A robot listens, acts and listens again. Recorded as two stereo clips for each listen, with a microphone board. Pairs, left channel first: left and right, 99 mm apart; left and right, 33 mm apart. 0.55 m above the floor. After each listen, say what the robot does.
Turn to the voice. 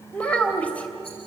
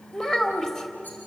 Turn 30° left.
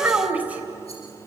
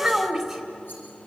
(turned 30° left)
Turn 15° right.
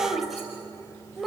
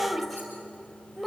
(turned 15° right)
Found it: a child speaking, straight ahead.